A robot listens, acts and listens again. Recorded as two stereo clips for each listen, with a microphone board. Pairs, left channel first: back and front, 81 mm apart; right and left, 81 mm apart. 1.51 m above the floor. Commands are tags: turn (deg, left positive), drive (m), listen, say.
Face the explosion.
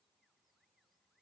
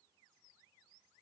<listen/>
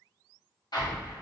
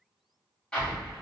<turn deg="-170"/>
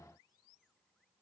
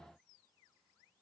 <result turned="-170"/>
<say>I heard an explosion from this way, but can't make it out now.</say>